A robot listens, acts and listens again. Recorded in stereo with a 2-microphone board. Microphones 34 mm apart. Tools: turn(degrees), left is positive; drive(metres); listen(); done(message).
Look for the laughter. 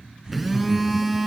turn(degrees=-20)
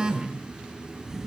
done("Facing the laughter.")